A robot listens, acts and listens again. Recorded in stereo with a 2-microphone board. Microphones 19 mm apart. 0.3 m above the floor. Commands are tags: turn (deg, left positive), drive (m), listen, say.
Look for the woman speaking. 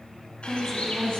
<turn deg="25"/>
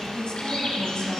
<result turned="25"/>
<turn deg="125"/>
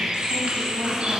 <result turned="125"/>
<listen/>
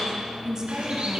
<turn deg="-40"/>
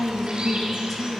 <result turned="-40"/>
<turn deg="25"/>
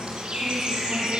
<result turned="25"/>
<listen/>
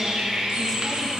<listen/>
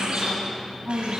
<turn deg="10"/>
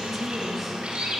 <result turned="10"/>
<say>Found it: a woman speaking, straight ahead, 1 to 2 m away.</say>